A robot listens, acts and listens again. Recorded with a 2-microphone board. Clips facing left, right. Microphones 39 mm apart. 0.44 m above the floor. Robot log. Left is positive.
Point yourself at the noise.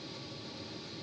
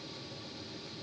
cmd idle
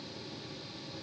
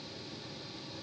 cmd idle
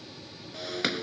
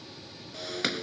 cmd yaw +30
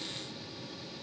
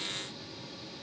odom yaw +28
cmd idle
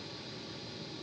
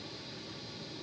end: I heard breaking glass, but can't make it out now. It was about 25° right or 150° left.